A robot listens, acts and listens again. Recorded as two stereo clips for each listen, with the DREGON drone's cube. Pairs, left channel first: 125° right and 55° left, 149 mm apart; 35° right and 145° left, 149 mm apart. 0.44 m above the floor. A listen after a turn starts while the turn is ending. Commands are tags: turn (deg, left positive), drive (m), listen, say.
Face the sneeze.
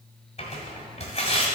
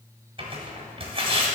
<listen/>
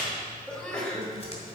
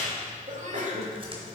<turn deg="155"/>
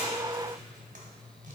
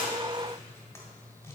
<say>I heard a sneeze from this way, but can't make it out now.</say>